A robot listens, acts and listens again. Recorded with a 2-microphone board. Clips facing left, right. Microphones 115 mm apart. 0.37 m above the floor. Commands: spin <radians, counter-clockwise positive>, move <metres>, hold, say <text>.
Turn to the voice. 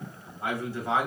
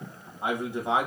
spin -0.26
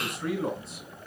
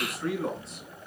spin 0.52
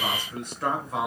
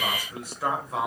spin 0.52
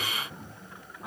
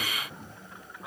spin 0.52
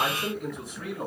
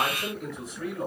spin 0.52
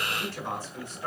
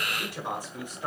spin -0.35
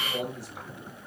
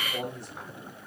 say Found it: a man speaking, straight ahead.